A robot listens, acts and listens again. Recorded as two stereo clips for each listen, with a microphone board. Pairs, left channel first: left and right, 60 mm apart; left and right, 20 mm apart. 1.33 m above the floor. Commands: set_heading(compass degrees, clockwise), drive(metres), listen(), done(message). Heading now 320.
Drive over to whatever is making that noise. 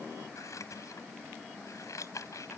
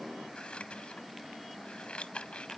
set_heading(255)
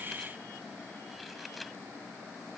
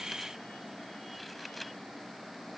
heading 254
drive(1.0)
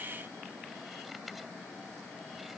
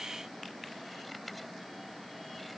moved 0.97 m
listen()
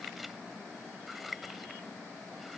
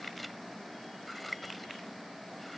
drive(1.0)
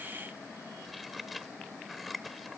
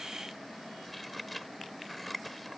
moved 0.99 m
drive(1.0)
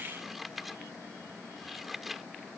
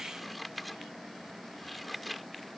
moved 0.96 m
drive(1.0)
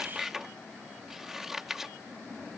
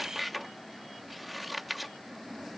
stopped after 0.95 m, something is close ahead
done("Arrived at the scissors, straight ahead.")